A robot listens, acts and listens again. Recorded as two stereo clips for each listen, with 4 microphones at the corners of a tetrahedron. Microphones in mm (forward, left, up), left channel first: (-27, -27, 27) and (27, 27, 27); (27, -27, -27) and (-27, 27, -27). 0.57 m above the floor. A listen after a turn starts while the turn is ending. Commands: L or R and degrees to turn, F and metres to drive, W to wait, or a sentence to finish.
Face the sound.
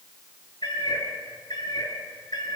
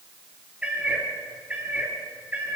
R160
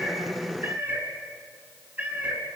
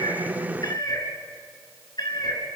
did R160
R25
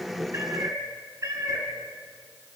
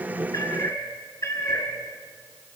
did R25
Facing the cat meowing, 2 to 4 m away.